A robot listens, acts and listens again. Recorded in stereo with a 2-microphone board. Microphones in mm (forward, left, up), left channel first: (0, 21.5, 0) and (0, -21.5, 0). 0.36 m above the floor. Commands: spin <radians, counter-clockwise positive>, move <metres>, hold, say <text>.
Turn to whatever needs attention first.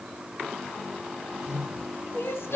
spin 1.57
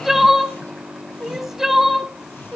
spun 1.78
say Facing the crying, under 1 m away.